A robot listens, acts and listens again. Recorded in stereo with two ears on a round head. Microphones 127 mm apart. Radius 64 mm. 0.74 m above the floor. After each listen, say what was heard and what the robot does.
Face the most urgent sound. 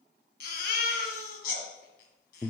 Turn 90° left.
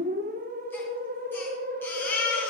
So it is at 15° left. Turn 15° left.
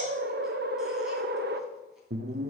Keep listening.
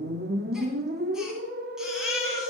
Facing the baby crying.